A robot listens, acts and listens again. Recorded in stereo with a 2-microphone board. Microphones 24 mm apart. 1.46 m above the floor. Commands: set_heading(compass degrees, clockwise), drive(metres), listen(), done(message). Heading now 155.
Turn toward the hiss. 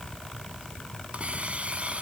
set_heading(215)
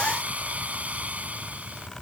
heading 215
set_heading(280)
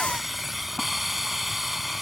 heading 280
done("Found it: a hiss, straight ahead.")